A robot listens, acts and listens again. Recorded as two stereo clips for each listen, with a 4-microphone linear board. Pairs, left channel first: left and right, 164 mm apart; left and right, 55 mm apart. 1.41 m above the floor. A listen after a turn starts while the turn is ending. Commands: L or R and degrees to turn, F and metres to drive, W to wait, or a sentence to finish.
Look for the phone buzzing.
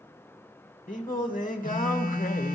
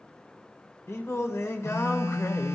L55
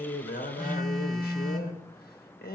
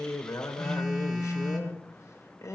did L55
Found it: a phone buzzing, straight ahead, 1 to 2 m away.